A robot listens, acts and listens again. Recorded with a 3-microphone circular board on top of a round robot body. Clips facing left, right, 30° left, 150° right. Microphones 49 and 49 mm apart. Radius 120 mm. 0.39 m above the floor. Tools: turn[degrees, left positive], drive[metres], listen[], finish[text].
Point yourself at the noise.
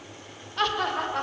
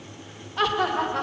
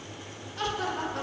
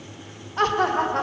Thought: The laughter: straight behind.
Action: turn[180]
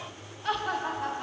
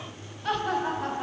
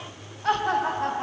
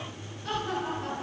Action: finish[Found it: laughter, straight ahead.]